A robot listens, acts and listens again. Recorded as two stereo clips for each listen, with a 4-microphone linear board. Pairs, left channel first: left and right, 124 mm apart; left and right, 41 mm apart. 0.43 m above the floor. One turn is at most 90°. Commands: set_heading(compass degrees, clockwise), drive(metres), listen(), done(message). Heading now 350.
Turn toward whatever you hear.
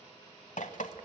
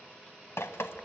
set_heading(260)
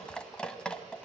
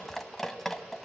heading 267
done("Found it: dripping, straight ahead, 1 to 2 m away.")